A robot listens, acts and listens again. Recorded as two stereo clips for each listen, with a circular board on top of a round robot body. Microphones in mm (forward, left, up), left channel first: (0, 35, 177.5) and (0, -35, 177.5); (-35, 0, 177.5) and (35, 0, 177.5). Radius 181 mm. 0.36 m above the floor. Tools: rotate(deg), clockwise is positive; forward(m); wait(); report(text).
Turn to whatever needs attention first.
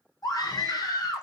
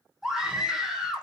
rotate(-85)
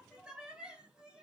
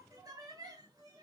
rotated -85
rotate(15)
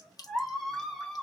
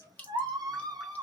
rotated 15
report("Facing the scream.")